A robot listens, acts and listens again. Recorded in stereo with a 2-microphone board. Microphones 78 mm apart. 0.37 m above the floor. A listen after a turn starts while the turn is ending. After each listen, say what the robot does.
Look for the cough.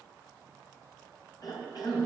Turn 60° left.
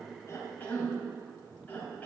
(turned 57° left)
Turn 25° left.
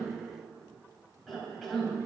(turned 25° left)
Facing the cough, 2 to 4 m away.